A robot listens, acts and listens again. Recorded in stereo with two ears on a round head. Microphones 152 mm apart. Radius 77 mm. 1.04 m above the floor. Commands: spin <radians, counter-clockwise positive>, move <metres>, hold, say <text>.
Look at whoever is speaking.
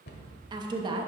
spin -0.44
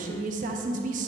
spin -2.27
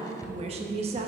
spin -0.61
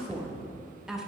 say Found it: a woman speaking, straight ahead.